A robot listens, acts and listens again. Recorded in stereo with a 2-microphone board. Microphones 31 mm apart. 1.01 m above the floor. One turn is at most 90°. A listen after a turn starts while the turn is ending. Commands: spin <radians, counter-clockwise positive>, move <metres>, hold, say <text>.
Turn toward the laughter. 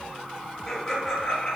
spin 0.52
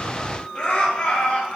spin 1.57
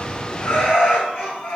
spin 1.40
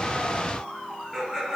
say Found it: laughter, straight ahead.